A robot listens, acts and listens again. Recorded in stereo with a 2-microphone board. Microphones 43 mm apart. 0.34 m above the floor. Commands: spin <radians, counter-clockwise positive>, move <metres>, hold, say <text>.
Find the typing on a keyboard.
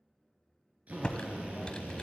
spin 0.44
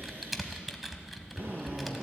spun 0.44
say Facing the typing on a keyboard.